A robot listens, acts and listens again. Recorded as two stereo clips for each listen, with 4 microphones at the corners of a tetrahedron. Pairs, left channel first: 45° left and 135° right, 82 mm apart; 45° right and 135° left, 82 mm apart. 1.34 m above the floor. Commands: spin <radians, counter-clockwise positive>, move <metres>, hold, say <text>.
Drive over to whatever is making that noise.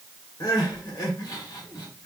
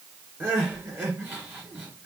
spin 1.31
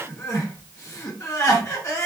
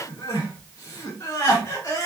move 1.0
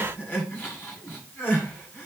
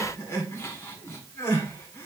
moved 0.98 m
move 1.0
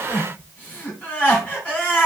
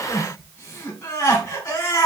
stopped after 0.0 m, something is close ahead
spin -0.17
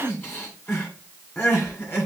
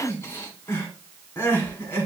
say Arrived at the crying, straight ahead.